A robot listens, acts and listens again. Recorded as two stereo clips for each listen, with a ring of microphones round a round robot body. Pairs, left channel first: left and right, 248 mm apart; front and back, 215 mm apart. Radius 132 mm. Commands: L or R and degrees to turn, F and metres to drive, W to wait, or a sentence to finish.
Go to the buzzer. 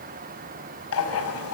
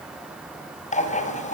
W
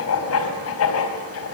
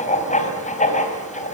W
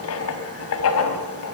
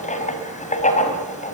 I can't make out a buzzer, only writing.